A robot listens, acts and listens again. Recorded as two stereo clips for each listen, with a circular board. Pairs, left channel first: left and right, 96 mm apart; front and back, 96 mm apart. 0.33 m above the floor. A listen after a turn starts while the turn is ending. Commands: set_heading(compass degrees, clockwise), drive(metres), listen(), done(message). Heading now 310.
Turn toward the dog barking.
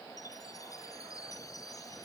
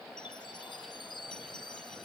listen()
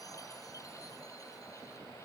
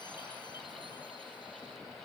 listen()
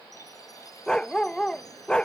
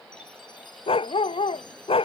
set_heading(300)
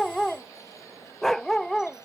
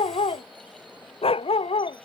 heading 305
done("Found it: a dog barking, straight ahead.")